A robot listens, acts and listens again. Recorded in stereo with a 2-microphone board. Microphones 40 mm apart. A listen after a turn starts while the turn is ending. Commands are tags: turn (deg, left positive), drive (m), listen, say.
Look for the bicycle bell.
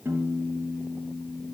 <listen/>
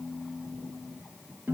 <listen/>
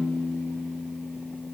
<say>I can't make out a bicycle bell, only a piano.</say>